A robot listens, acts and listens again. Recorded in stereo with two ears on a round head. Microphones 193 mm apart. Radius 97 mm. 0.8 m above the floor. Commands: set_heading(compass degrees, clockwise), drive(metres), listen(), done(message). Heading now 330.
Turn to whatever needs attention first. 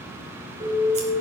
set_heading(355)
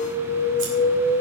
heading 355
done("Facing the alarm, over 4 m away.")